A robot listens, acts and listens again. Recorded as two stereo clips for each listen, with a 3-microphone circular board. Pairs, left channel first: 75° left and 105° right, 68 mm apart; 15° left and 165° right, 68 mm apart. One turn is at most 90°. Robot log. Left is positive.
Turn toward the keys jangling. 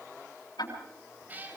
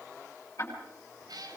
cmd idle
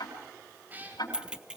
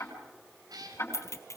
note: The keys jangling: 30° right.
cmd yaw -30
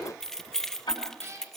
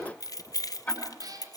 note: The keys jangling is now 10° right.
cmd yaw -10
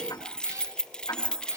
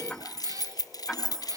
end: Found it: keys jangling, straight ahead.